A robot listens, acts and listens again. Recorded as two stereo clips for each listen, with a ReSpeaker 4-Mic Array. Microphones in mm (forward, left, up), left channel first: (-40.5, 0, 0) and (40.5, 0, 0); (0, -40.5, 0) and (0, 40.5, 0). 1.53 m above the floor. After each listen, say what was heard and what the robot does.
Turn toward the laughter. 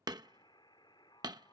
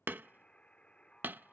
Keep listening.
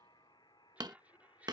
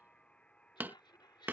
The laughter: 70° right. Turn 70° right.
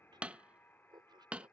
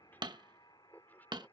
The laughter is now 20° right. Turn 20° right.
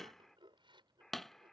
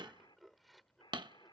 Found it: laughter, straight ahead.